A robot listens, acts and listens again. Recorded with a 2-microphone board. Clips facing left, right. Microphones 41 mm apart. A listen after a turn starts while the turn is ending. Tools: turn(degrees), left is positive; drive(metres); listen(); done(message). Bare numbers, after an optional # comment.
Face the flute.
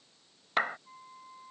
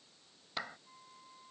# The flute: about 30° left or 150° left.
turn(30)
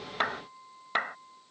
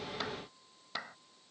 # So it is at 120° left.
turn(120)
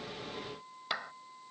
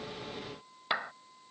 # The flute is now 20° left.
turn(20)
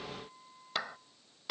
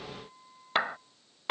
done("Facing the flute.")